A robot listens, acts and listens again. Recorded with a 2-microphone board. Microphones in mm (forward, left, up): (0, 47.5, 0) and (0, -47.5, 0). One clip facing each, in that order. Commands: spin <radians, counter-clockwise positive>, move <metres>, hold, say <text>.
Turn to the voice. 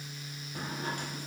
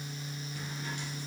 hold
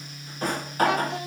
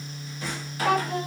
spin -0.79
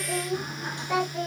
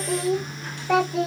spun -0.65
spin -1.75
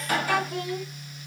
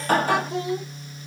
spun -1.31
spin -0.44
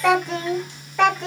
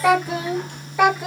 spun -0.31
say Facing the child speaking, 1 to 2 m away.